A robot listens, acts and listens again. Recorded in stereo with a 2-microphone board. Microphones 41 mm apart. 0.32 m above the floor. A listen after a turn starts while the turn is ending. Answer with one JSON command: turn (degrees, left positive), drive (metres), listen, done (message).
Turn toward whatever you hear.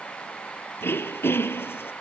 {"turn": 90}
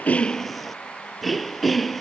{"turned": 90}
{"done": "Facing the throat clearing."}